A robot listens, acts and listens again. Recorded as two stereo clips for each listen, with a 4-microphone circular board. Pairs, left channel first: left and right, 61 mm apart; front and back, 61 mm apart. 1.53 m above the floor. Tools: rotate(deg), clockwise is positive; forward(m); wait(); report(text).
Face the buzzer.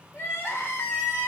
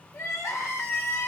wait()
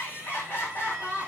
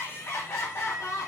wait()
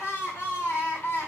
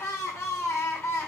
report("I can't make out a buzzer, only crying.")